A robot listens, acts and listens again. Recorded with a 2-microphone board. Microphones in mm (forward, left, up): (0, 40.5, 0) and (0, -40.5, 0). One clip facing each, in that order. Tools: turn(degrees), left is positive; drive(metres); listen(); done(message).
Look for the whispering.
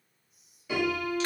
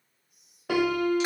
turn(degrees=-55)
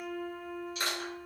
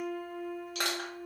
listen()
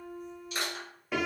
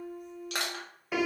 listen()
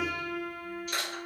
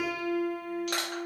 done("I heard whispering, but can't make it out now. It was about straight ahead or 70° right.")